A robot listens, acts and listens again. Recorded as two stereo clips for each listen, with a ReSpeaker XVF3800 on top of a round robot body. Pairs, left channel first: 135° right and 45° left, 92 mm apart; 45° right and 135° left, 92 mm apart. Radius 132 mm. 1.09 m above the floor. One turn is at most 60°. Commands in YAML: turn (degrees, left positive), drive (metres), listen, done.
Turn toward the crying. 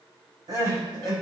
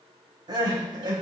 turn: 60
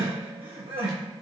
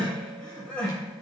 turn: 35
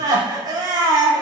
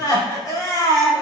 done: "Found it: crying, straight ahead, over 4 m away."